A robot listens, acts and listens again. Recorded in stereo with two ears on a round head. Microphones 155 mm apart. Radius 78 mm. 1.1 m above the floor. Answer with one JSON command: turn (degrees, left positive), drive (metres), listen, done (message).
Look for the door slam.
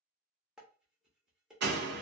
{"turn": -70}
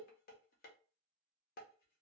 {"listen": true}
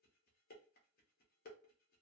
{"done": "I heard a door slam, but can't make it out now. It was about straight ahead or 40° right."}